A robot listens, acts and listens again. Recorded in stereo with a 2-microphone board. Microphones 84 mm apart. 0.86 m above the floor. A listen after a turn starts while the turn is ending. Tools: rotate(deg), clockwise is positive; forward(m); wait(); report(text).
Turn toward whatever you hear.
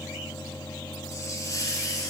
rotate(-40)
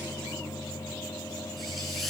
wait()
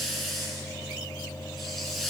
report("Found it: a hiss, straight ahead, 2 to 4 m away.")